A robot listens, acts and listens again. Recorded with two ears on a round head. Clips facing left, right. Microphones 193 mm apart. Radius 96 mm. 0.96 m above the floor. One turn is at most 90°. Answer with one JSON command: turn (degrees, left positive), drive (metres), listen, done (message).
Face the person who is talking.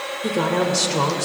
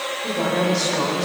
{"turn": 70}
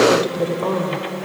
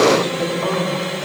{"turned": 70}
{"turn": 40}
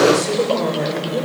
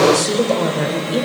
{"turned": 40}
{"done": "Facing the woman speaking."}